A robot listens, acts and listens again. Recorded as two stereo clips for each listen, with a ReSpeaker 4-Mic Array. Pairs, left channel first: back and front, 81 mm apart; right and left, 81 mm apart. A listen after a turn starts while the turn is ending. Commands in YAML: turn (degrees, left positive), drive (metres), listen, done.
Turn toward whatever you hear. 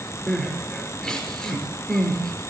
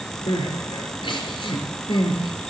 turn: -100
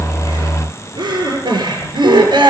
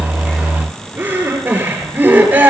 turn: 20
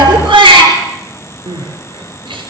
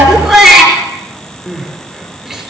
done: "Found it: crying, straight ahead, over 4 m away."